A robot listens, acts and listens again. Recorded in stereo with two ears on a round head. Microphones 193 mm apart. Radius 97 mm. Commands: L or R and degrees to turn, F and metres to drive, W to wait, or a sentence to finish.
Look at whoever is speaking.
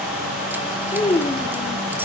L25
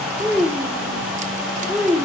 Facing the child speaking.